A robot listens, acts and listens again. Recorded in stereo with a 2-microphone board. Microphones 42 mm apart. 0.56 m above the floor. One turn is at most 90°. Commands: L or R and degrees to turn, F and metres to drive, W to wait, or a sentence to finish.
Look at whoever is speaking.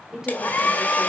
R30
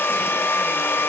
W
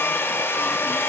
W
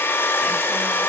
I heard a woman speaking, but can't make it out now. It was about 15° left or 135° right.